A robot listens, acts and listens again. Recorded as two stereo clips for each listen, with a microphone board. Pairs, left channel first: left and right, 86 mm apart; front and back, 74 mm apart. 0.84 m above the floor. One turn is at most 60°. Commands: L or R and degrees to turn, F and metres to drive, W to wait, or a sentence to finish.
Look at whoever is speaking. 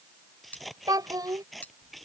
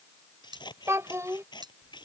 R60
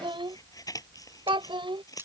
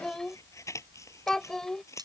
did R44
R60
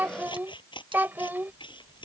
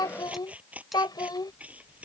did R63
R20
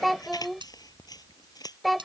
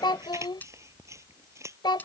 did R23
Facing the child speaking.